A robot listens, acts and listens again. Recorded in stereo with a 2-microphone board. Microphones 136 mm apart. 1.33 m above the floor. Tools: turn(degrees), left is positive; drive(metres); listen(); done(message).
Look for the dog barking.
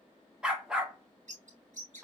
turn(degrees=-30)
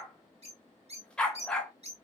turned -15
done("Found it: a dog barking, straight ahead, 1 to 2 m away.")